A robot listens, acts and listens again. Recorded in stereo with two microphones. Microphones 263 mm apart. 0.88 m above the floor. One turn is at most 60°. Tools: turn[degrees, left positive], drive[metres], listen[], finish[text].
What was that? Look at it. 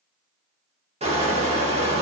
Thought: The crushing: about 25° right or 155° right.
Action: turn[-25]
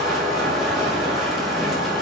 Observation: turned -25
Action: finish[Facing the crushing.]